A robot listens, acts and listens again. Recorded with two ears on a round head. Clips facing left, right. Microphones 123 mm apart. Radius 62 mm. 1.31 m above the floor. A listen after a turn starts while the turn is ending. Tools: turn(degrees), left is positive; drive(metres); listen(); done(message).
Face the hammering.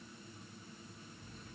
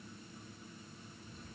listen()
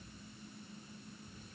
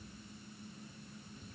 listen()
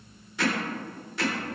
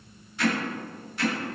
turn(degrees=65)
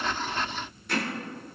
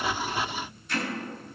turn(degrees=50)
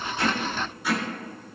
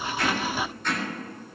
turn(degrees=10)
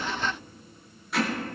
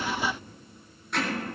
done("Facing the hammering, 2 to 4 m away.")